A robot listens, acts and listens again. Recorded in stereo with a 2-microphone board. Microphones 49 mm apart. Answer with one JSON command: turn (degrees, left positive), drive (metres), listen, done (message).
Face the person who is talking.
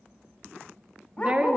{"turn": -25}
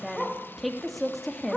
{"done": "Facing the woman speaking, 2 to 4 m away."}